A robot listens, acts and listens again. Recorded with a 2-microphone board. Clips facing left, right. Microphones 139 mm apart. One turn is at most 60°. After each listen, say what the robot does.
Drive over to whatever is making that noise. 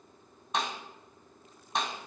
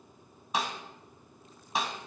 Turn 30° right.
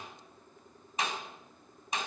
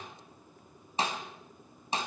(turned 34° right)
Turn 60° right.
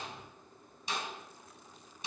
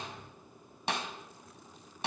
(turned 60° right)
Turn 60° right.
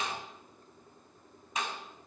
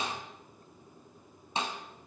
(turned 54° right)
Turn 30° right.
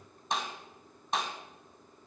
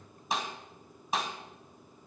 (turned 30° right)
Drive 1.0 m forward.
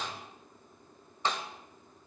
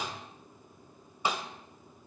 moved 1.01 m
Turn 15° right.
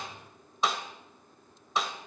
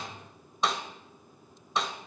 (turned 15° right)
Drive 1.0 m forward.
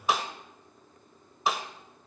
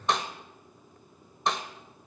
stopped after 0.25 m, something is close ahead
Arrived at the snare drum, straight ahead.